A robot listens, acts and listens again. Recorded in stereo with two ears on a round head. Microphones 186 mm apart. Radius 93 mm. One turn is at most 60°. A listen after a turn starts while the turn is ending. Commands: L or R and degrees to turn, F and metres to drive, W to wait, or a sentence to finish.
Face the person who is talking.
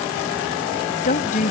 L40
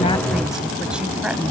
W
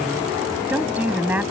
R10
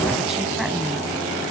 W
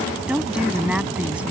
Facing the woman speaking.